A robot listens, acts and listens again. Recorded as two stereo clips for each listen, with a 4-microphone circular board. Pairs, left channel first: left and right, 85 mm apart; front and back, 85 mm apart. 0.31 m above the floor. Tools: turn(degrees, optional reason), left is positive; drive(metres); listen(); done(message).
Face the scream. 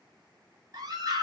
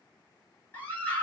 turn(degrees=-65, reason="The scream: 65° right.")
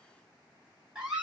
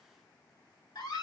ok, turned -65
turn(degrees=-10, reason="The scream is now 10° right.")
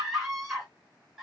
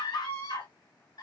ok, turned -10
done("Facing the scream.")